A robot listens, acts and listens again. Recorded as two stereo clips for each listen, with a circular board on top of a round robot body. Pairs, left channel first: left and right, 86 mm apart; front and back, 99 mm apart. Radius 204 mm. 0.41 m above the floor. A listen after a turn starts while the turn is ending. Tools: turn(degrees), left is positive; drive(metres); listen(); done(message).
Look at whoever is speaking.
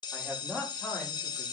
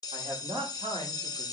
turn(degrees=170)
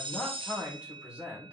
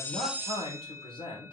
turn(degrees=-15)
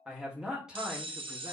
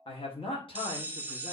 turn(degrees=-10)
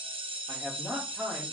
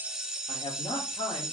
turn(degrees=-15)
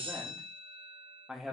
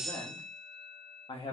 done("Found it: a man speaking, straight ahead.")